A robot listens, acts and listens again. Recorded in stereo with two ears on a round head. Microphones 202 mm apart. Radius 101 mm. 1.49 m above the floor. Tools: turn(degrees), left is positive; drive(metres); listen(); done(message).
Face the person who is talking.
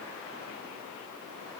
listen()
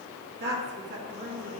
turn(degrees=-55)
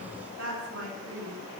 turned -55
turn(degrees=-60)
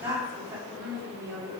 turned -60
turn(degrees=-10)
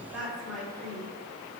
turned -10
done("Facing the woman speaking, over 4 m away.")